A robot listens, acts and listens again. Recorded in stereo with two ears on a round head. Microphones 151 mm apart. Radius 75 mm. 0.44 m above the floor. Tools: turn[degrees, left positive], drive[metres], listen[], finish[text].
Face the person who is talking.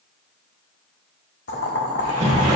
Action: listen[]
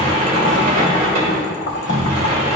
Action: listen[]
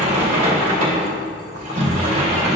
Action: finish[I can't make out anyone speaking, only a sliding door and boiling.]